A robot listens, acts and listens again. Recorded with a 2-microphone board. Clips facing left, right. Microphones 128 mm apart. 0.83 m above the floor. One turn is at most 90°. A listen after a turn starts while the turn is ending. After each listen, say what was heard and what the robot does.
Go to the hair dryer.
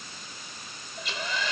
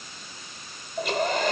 The hair dryer: about 55° right or 125° right. Turn 55° right.
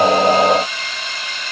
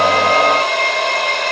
So it is at 70° right. Turn 70° right.
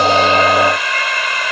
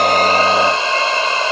The hair dryer is now 30° right. Turn 30° right.
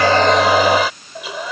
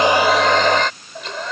Drive 1.0 m forward.
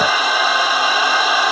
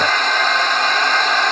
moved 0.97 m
The hair dryer is now 10° left. Turn 10° left.
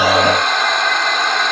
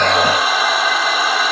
Drive 1.0 m forward.
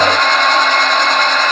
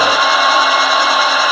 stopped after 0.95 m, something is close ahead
The hair dryer is now 10° right. Turn 10° right.
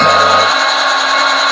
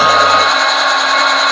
I am next to the hair dryer.